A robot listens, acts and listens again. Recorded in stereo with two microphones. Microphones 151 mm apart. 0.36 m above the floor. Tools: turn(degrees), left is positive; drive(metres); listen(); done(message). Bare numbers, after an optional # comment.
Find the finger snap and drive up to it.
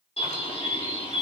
listen()
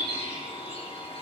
listen()
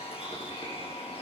done("I can't make out a finger snap, only a bird.")